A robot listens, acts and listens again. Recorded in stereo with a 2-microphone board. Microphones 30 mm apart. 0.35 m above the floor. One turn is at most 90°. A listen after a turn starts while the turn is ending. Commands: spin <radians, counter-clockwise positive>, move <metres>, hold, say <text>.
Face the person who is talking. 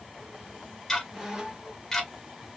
hold
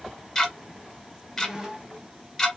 hold
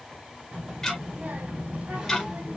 spin -1.13
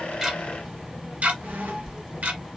spin -0.17
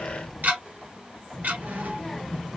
say Facing the child speaking, 1 to 2 m away.